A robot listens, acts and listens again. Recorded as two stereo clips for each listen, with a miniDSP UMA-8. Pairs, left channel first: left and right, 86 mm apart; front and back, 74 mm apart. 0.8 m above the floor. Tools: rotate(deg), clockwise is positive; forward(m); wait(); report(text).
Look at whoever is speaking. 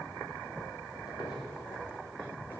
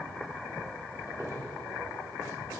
wait()
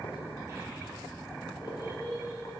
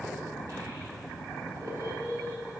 rotate(140)
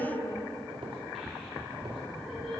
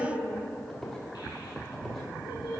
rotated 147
report("Found it: a child speaking, straight ahead, 1 to 2 m away.")